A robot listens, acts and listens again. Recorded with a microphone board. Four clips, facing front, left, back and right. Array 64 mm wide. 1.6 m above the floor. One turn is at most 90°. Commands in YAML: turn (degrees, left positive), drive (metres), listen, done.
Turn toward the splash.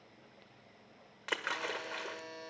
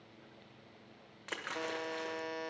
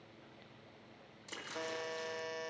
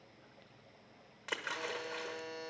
done: "Found it: a splash, straight ahead, 1 to 2 m away."